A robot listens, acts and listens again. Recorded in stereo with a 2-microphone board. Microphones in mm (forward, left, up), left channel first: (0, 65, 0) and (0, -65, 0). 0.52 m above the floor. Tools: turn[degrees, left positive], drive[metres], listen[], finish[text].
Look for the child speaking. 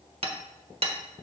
Action: listen[]
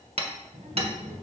Action: turn[-90]
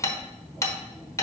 Action: finish[Found it: a child speaking, straight ahead.]